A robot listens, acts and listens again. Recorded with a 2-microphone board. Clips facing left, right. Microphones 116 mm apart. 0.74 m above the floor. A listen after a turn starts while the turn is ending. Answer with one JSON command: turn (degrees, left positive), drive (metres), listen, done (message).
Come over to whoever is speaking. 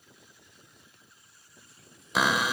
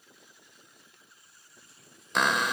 {"listen": true}
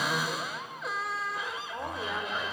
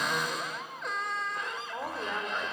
{"turn": -30}
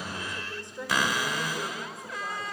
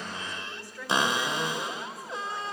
{"turn": 25}
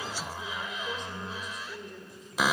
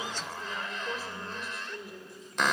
{"drive": 1.0}
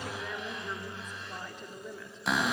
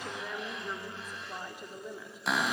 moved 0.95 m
{"turn": -10}
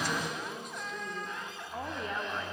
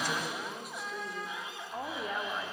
{"drive": 1.0}
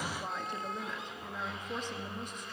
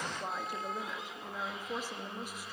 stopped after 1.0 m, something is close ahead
{"turn": -10}
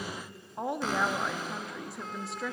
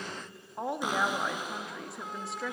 {"done": "I am next to the woman speaking."}